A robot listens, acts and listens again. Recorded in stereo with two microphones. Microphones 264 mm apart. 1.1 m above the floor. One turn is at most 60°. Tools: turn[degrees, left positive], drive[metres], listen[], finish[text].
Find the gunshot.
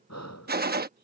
Thought: The gunshot: about 35° right or 145° right.
Action: turn[-35]
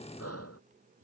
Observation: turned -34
Action: listen[]
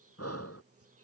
Action: finish[I heard a gunshot, but can't make it out now. It was about 5° right or 110° right.]